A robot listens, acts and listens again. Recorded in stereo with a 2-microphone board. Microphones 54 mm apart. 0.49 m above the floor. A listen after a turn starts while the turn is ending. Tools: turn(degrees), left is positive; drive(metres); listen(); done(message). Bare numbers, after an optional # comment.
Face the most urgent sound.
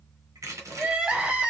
# The crying: about 20° right or 160° right.
turn(-20)
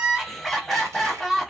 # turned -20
done("Facing the crying.")